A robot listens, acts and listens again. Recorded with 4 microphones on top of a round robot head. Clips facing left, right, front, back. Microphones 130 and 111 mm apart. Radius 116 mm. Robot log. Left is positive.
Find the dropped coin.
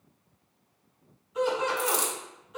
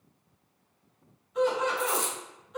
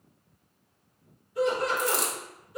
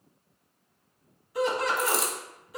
note: The dropped coin: 95° left.
cmd yaw +95
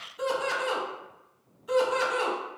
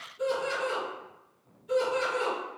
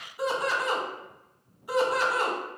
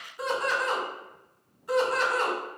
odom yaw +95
end: Facing where the dropped coin came from. I can't hear it now.